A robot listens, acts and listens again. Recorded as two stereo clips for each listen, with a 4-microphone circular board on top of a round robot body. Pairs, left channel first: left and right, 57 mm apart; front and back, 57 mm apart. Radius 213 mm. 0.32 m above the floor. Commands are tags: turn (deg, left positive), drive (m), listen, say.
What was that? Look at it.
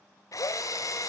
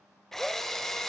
<turn deg="85"/>
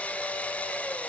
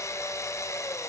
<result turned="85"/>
<turn deg="25"/>
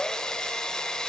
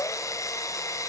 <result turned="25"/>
<turn deg="15"/>
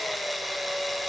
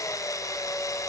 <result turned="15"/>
<say>Facing the drill, 1 to 2 m away.</say>